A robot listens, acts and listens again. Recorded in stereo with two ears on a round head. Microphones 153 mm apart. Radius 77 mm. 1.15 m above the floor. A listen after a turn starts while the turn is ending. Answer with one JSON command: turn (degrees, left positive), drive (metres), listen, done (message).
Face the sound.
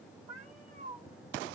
{"turn": -50}
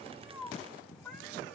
{"done": "Found it: a cat meowing, straight ahead."}